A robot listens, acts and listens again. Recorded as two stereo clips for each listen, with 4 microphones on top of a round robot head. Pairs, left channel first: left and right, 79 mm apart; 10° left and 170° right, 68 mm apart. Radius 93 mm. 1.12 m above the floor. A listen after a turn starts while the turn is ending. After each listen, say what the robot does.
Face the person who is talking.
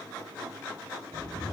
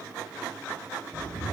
Keep listening.
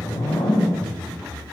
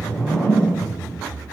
Keep listening.
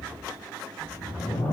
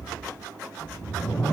I can't make out anyone speaking, only a whoosh.